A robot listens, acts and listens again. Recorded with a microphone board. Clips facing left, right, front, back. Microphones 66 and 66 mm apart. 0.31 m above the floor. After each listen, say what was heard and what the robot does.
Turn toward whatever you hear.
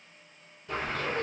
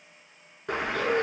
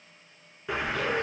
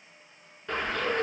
The bird: 80° right. Turn 80° right.
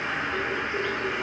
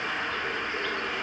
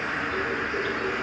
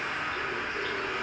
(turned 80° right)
The bird is now 20° left. Turn 20° left.
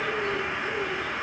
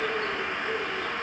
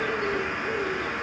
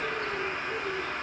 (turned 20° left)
Facing the bird.